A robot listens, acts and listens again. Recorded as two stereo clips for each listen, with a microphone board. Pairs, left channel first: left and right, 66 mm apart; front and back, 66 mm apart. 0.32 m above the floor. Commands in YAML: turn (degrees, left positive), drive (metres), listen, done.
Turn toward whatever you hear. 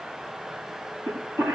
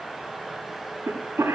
turn: -135
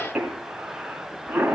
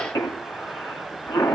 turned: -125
turn: -10
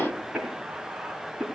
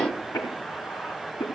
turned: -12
done: "Found it: a cough, straight ahead."